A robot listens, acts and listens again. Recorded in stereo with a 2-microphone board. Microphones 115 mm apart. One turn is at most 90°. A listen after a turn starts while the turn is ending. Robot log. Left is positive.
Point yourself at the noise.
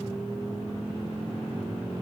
cmd idle
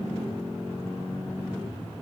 cmd idle
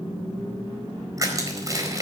note: The crushing: about 30° right or 150° right.
cmd yaw -30
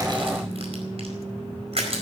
note: So it is at 120° right.
cmd yaw -90
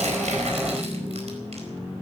note: Nothing new. It was at 30° right.
cmd yaw -30
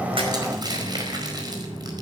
note: The crushing is now 35° right.
cmd yaw -35
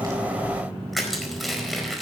end: Found it: crushing, straight ahead.